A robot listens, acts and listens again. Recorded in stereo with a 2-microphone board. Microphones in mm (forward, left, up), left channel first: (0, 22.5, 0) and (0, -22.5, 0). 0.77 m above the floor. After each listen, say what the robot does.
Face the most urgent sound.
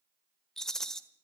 Keep listening.
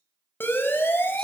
Turn 50° left.
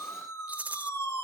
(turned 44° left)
Turn 85° left.
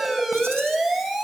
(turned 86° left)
Found it: a siren, straight ahead.